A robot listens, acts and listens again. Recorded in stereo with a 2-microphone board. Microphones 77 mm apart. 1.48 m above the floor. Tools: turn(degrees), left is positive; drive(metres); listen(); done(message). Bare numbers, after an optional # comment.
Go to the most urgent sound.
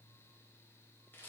listen()
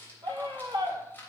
turn(-90)
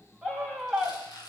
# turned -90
drive(1.0)
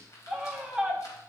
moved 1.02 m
drive(1.0)
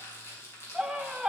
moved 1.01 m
# The scream is now 10° right.
turn(-10)
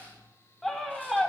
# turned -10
drive(1.0)
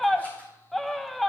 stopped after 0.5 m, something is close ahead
done("Arrived at the scream, straight ahead.")